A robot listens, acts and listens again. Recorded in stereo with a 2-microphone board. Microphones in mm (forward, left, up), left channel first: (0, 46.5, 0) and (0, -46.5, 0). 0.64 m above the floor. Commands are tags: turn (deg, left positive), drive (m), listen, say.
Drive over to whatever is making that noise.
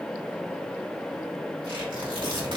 <turn deg="-70"/>
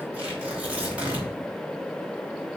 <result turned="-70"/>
<turn deg="-15"/>
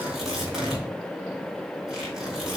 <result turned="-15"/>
<drive m="1.0"/>
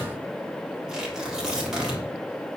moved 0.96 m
<turn deg="-10"/>
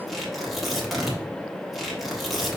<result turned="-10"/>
<drive m="1.0"/>
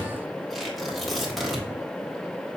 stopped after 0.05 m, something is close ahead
<say>I am next to the tearing paper.</say>